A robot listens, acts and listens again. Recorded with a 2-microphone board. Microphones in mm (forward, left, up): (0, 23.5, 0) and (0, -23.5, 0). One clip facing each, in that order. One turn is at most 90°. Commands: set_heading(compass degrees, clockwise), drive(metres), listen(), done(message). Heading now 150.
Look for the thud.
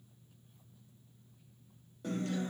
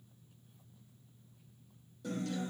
listen()
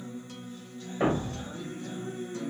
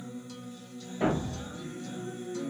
set_heading(100)
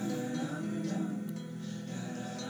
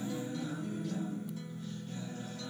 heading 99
listen()
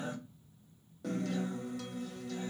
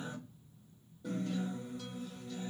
done("I heard a thud, but can't make it out now. It was about straight ahead or 80° left.")